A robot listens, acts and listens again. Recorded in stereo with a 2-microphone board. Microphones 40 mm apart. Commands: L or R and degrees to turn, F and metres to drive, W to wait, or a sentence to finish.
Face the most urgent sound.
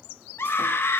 L90
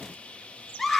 Found it: a scream, straight ahead.